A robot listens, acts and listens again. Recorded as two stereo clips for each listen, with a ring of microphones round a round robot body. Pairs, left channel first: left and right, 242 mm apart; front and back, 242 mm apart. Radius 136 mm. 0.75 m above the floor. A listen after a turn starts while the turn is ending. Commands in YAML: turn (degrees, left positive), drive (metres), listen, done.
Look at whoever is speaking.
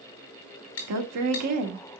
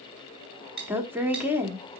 turn: -100
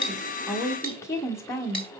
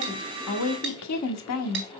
turn: 10
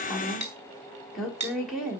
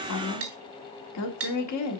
done: "Found it: a woman speaking, straight ahead, 1 to 2 m away."